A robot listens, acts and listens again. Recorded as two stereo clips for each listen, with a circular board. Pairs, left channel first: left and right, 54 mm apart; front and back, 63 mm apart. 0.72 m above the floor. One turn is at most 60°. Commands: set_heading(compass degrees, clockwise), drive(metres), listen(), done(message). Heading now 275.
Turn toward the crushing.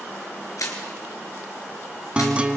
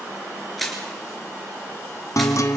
set_heading(215)
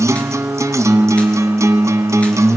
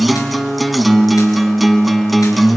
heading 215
set_heading(185)
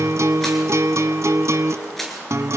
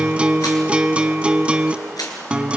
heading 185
done("Facing the crushing, over 4 m away.")